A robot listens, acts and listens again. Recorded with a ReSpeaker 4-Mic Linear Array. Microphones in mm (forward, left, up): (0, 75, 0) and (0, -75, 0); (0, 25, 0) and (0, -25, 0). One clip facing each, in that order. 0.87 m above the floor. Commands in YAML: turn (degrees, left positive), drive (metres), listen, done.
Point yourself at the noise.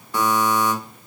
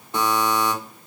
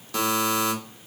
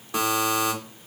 turn: -25
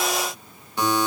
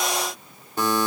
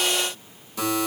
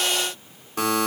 turn: -135
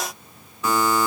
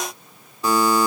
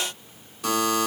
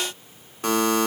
turn: -35
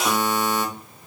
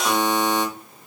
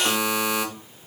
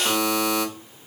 turn: 10
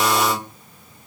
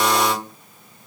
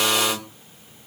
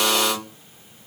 done: "Facing the buzzer."